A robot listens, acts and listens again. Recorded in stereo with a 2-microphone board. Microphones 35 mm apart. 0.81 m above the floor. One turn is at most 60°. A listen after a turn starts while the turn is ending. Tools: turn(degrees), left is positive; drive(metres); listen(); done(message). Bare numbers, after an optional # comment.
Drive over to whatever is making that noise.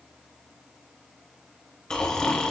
# The snoring: about 30° left or 150° left.
turn(30)
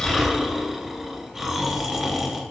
drive(1.0)
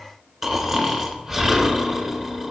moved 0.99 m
drive(1.0)
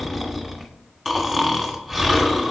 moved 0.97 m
drive(1.0)
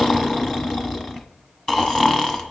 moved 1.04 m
# The snoring is now 20° left.
turn(20)
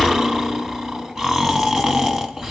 drive(1.0)
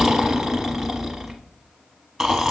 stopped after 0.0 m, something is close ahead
done("Arrived at the snoring, straight ahead.")